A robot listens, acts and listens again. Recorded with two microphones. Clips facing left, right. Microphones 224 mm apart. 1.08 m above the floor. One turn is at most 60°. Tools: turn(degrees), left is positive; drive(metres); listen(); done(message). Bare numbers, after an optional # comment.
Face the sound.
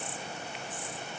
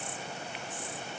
listen()
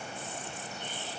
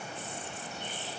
listen()
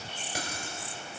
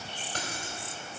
turn(30)
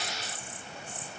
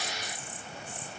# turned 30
listen()
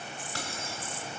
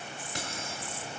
# So it is at 20° right.
turn(-20)
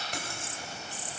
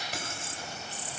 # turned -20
done("Facing the keys jangling.")